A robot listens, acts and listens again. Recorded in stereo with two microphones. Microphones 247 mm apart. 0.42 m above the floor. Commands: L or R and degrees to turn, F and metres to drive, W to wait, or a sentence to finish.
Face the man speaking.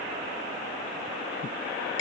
W
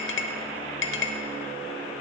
W
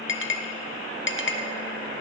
I can't make out a man speaking, only a clink.